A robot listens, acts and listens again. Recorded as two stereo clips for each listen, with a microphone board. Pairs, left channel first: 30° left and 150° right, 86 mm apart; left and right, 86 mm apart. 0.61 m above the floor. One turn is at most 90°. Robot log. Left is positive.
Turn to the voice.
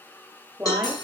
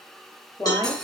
note: The woman speaking: 130° left.
cmd yaw +90
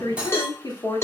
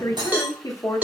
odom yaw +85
note: The woman speaking is now 50° left.
cmd yaw +50
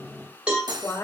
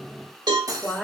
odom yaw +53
end: Facing the woman speaking.